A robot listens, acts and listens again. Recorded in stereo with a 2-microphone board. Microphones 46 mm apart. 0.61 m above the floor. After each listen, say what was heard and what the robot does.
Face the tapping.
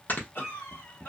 The tapping: about 15° right or 165° right. Turn 15° right.
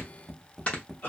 Found it: tapping, straight ahead.